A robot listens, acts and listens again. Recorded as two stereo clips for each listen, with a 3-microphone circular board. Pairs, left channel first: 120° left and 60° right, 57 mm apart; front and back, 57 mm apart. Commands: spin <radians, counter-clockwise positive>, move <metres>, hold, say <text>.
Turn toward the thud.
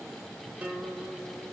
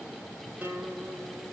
hold
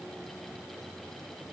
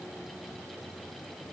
hold
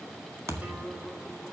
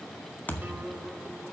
spin -0.87
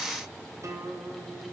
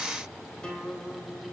say I heard a thud from this way, but can't make it out now.